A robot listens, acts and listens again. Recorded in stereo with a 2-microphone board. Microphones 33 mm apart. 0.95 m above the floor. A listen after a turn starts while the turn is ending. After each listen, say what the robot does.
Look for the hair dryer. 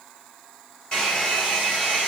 Turn 25° left.
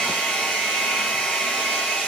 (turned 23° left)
Turn 130° left.
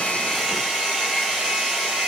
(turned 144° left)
Turn 15° right.
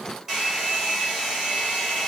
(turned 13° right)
Found it: a hair dryer, straight ahead.